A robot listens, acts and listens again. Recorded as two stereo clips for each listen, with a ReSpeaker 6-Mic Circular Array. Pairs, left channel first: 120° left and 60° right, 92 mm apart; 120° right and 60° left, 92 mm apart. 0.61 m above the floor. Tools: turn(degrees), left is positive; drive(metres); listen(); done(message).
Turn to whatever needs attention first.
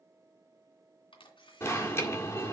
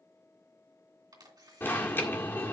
turn(degrees=175)
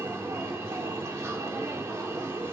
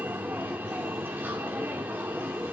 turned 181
done("Found it: an alarm, straight ahead.")